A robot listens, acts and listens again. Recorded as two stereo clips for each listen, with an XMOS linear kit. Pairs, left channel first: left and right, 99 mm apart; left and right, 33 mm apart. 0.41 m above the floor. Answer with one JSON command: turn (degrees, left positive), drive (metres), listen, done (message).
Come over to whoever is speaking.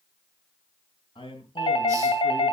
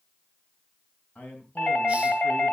{"turn": 60}
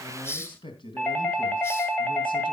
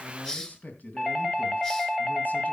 {"turn": 60}
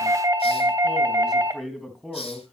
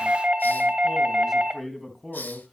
{"drive": 1.0}
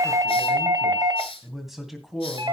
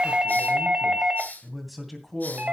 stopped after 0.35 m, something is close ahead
{"done": "Something is in my way. I am facing the man speaking but have not reached it."}